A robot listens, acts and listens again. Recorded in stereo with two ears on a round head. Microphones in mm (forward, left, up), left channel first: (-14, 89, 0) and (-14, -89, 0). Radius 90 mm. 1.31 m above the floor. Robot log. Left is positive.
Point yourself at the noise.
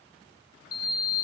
note: The sliding door: about 50° left or 130° left.
cmd yaw +50
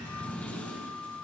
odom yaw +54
note: So it is at 10° left.
cmd yaw +10
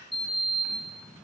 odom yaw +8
end: Found it: a sliding door, straight ahead, 2 to 4 m away.